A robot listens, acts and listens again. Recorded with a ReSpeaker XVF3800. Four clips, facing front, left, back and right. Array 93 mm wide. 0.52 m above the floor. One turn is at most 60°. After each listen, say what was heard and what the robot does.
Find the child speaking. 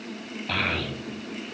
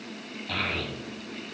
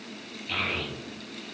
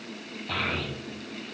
The child speaking: 10° right. Turn 10° right.
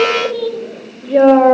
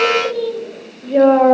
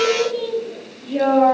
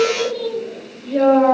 The child speaking is now 25° left. Turn 25° left.
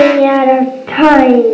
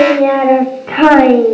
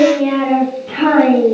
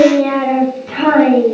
The child speaking is now 50° left. Turn 50° left.
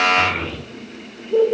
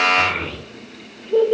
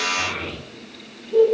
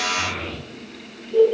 The child speaking is now 65° left. Turn 60° left.
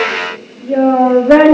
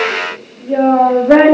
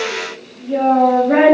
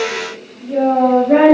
The child speaking is now 35° left. Turn 35° left.
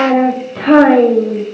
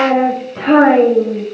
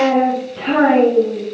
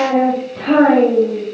The child speaking is now 15° left. Turn 15° left.
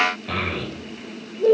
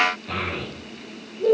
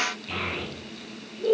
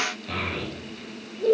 Facing the child speaking.